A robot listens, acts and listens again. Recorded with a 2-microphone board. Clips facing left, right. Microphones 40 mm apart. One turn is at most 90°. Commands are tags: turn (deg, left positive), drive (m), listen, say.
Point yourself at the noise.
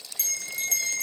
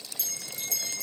<turn deg="60"/>
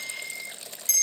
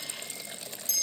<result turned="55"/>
<turn deg="60"/>
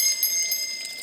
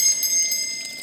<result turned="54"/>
<say>Facing the bell.</say>